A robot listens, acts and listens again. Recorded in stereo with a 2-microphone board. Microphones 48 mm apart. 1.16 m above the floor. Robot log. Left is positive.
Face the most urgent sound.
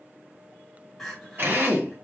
cmd yaw +30
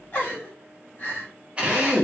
note: So it is at 145° left.
cmd yaw +145
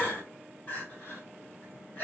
note: The crying is now 40° left.
cmd yaw +40
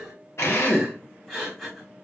end: Facing the crying.